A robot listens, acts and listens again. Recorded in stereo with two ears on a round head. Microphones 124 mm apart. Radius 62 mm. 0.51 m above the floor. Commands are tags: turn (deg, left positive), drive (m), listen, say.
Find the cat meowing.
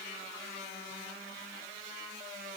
<listen/>
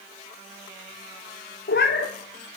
<turn deg="70"/>
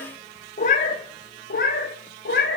<turn deg="75"/>
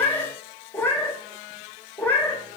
<turn deg="15"/>
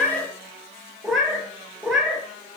<say>Facing the cat meowing, 1 to 2 m away.</say>